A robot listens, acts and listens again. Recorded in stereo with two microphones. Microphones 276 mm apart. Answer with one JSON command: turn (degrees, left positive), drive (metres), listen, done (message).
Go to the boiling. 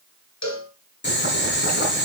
{"turn": 40}
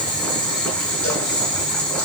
{"drive": 1.0}
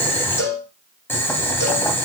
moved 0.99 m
{"turn": 10}
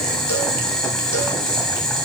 {"drive": 1.0}
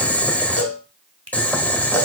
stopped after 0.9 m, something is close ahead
{"done": "Arrived at the boiling, straight ahead."}